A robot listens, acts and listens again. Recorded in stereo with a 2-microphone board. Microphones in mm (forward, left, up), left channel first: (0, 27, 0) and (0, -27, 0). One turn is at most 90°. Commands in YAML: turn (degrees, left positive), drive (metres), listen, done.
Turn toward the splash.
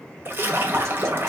turn: -40
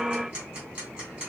listen: true
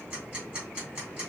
done: "I heard a splash, but can't make it out now. It was about straight ahead or 100° right."